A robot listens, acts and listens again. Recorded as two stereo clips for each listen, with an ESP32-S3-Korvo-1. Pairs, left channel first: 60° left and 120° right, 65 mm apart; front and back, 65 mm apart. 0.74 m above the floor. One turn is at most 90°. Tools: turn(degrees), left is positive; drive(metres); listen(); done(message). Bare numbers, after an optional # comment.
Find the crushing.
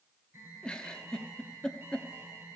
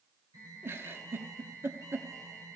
listen()
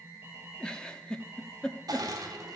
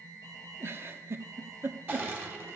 # The crushing: 120° right.
turn(-90)
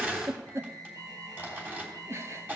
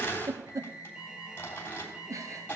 # The crushing is now 55° right.
turn(-55)
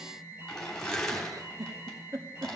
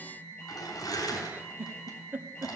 # The crushing is now 20° right.
turn(-20)
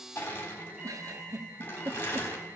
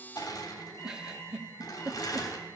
done("Found it: crushing, straight ahead, 2 to 4 m away.")